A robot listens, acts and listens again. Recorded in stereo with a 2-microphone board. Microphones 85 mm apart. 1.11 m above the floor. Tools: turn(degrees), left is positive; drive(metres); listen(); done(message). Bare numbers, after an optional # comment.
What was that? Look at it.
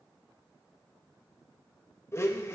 # The blender: about 30° left or 150° left.
turn(30)
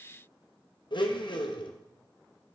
# So it is at 115° left.
turn(115)
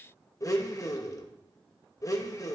# The blender is now 40° left.
turn(40)
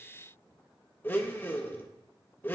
# The blender is now 25° left.
turn(25)
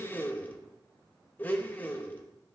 # The blender is now 20° left.
turn(20)
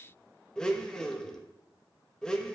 # The blender is now 10° left.
turn(10)
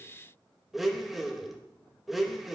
done("Found it: a blender, straight ahead.")